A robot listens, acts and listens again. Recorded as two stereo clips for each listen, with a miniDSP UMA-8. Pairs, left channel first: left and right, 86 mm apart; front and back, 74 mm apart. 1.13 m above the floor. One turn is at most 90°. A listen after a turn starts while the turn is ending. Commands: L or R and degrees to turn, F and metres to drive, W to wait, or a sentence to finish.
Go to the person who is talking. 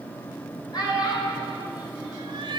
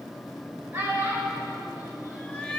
L90
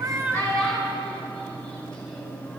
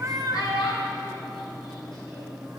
L10
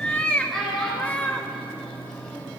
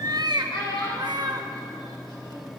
F1.0
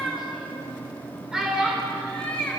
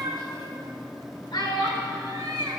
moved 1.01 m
F1.0
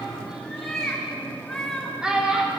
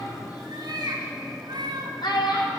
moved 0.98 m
R10
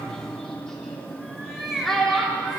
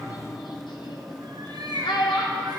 F1.0
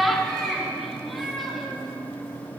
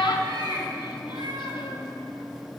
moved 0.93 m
F1.0
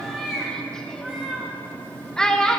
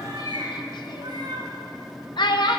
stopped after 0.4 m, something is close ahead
L10
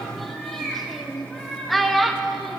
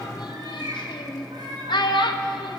Arrived at the child speaking, straight ahead.